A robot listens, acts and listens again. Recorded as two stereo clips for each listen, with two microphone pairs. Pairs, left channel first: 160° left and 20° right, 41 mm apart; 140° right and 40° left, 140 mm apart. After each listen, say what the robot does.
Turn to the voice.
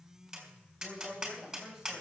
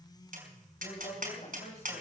Turn 100° right.
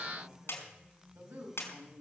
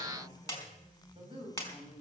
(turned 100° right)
Turn 10° right.
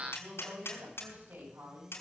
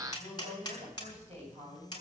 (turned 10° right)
Found it: a woman speaking, straight ahead.